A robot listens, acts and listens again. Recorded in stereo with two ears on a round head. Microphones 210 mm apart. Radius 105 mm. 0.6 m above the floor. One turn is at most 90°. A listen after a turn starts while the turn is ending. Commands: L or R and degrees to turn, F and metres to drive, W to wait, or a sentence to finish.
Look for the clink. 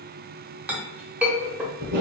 R30
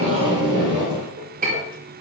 R90
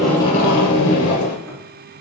R50
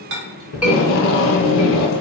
W
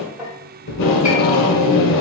Found it: a clink, straight ahead, 1 to 2 m away.